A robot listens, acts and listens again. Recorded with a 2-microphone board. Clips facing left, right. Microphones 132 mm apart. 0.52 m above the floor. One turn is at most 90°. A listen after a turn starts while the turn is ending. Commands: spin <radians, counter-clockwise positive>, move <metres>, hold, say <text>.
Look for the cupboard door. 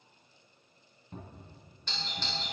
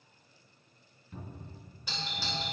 spin 0.70
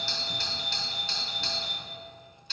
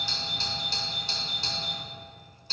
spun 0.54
hold
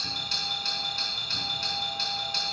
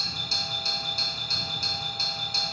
hold
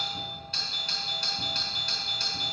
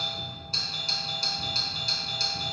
say I heard a cupboard door, but can't make it out now. It was about 10° left or 110° left.